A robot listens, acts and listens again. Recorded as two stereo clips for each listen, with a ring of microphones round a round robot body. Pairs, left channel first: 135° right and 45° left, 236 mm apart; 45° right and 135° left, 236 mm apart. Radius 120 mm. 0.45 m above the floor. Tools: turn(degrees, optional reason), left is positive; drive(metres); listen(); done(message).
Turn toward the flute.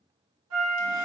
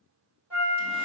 turn(degrees=50, reason="The flute: 50° left.")
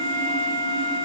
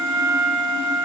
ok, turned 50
turn(degrees=10, reason="The flute is now 10° left.")
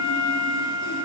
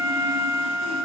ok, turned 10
done("Found it: a flute, straight ahead.")